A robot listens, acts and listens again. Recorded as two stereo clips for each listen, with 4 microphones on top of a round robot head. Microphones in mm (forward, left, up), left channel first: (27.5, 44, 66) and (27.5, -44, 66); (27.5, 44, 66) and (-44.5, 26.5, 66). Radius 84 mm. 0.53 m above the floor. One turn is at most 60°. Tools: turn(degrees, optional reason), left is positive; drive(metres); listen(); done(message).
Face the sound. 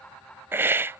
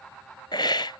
turn(degrees=-25, reason="The hiss: 25° right.")
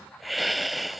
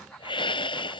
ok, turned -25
done("Facing the hiss.")